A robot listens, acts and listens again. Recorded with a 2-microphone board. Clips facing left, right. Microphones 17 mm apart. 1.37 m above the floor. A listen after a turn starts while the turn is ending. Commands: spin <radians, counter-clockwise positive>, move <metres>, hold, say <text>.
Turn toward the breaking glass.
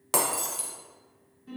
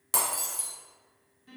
spin 0.35
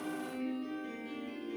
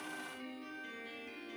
hold
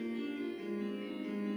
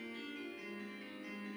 say I heard breaking glass, but can't make it out now. It was about straight ahead or 140° left.